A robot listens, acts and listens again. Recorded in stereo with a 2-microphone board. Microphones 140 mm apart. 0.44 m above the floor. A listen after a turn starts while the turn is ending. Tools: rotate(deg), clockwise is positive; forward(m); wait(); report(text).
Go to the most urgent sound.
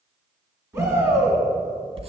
rotate(20)
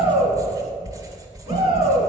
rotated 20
rotate(135)
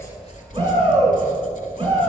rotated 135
rotate(35)
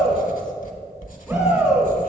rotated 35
forward(1.0)
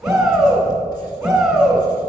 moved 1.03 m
forward(1.0)
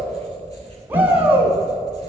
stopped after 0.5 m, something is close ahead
rotate(20)
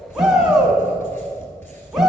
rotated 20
report("I am next to the shout.")